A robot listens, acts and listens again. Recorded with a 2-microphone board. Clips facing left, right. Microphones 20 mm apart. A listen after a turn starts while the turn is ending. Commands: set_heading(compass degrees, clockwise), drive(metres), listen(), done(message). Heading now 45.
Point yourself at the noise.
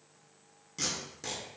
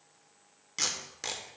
set_heading(85)
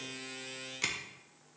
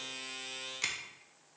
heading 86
done("Facing the tape being pulled, 1 to 2 m away.")